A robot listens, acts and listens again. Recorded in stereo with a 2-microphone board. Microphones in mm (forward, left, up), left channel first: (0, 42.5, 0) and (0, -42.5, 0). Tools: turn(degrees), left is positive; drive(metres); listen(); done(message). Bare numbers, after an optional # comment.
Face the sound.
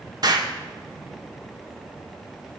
# The explosion: about 50° right or 130° right.
turn(-50)
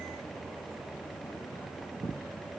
listen()
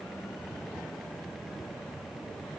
done("I heard an explosion, but can't make it out now. It was about straight ahead or 80° right.")